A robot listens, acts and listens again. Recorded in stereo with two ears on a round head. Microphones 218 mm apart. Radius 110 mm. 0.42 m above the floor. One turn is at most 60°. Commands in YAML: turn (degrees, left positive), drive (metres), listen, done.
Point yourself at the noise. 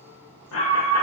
turn: 60
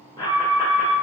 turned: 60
turn: 20
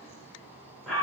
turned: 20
done: "Facing the alarm."